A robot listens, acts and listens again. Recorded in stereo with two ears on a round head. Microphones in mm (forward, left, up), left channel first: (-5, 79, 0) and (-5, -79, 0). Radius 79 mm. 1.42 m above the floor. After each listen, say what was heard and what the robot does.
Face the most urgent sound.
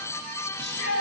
The shout: about 65° left or 115° left. Turn 65° left.
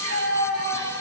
So it is at 50° left. Turn 50° left.
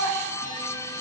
The shout is now 10° right. Turn 10° right.
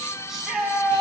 Facing the shout.